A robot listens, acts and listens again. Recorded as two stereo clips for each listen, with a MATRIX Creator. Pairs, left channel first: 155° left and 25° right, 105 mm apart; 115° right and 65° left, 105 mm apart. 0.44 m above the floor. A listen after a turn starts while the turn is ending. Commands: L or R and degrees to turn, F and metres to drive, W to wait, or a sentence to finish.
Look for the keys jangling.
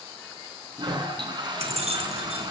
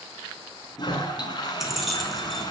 R20
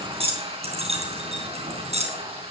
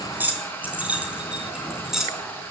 R15
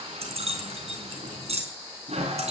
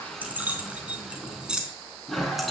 R15
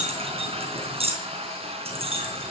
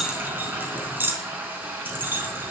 Facing the keys jangling, 2 to 4 m away.